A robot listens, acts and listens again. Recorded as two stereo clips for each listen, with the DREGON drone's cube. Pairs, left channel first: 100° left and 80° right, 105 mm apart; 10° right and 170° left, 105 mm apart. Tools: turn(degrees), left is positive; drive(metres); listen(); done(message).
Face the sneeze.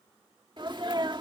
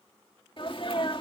turn(degrees=-40)
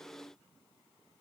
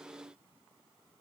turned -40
done("Facing where the sneeze came from. I can't hear it now.")